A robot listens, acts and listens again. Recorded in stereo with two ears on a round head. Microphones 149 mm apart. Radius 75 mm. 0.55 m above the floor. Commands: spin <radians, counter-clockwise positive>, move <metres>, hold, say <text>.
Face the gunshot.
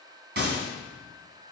spin -1.13
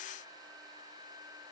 hold
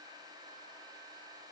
say I heard a gunshot, but can't make it out now. It was about straight ahead or 50° right.